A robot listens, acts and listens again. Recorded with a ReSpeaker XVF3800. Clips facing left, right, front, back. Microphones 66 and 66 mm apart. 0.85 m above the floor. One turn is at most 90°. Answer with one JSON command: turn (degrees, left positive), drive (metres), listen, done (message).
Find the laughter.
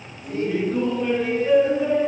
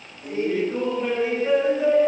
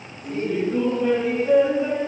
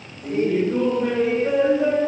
{"turn": -90}
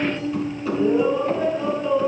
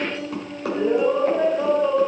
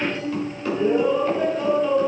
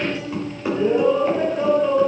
{"turn": -90}
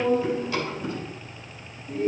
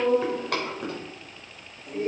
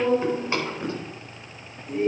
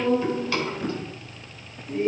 {"turn": -70}
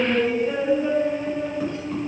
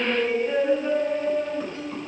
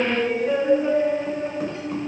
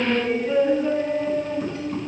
{"done": "Facing the laughter, over 4 m away."}